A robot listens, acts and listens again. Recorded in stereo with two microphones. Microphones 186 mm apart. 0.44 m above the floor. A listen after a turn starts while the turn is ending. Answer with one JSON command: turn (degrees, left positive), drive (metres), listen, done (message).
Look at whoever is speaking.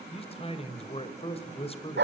{"turn": 30}
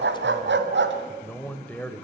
{"turn": 10}
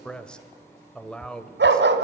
{"done": "Facing the man speaking."}